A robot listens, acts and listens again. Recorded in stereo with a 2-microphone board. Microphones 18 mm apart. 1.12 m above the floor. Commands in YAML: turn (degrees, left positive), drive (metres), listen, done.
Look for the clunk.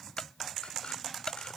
turn: 40
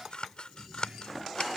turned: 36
listen: true
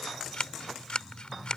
done: "I heard a clunk, but can't make it out now. It was about 5° left or 100° left."